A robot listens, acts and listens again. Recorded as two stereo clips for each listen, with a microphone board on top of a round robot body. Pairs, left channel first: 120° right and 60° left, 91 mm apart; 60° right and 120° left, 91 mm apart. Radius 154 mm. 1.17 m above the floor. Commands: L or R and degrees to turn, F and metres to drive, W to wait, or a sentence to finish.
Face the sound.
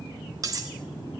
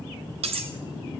L115
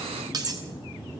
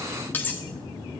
L10
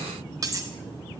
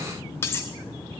Found it: cutlery clinking, straight ahead.